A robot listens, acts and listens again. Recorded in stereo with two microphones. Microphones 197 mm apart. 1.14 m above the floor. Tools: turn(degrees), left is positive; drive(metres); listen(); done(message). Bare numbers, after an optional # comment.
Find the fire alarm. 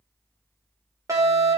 # The fire alarm: about 15° right or 165° right.
turn(-15)
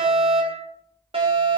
# So it is at 150° right.
turn(-150)
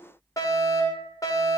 # The fire alarm is now 15° left.
turn(15)
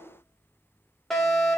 done("Facing the fire alarm, over 4 m away.")